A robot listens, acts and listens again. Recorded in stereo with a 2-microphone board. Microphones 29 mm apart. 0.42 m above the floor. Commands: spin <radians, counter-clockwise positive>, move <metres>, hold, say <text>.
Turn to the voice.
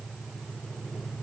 hold
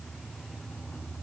hold
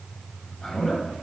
spin 0.52
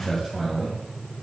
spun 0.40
spin 0.17
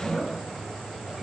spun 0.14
say Facing the man speaking, 2 to 4 m away.